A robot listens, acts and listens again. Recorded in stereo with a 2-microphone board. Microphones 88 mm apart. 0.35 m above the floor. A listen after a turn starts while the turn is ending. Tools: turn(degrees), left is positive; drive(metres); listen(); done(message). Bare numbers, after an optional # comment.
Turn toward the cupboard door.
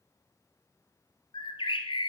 listen()
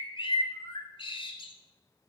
listen()
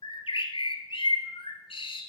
done("I can't make out a cupboard door to turn to.")